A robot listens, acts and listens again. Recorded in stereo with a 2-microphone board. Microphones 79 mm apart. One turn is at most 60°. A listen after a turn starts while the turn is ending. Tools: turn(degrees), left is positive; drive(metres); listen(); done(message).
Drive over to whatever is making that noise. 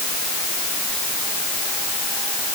listen()
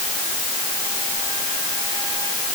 listen()
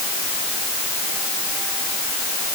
done("I can't make out anything to turn to.")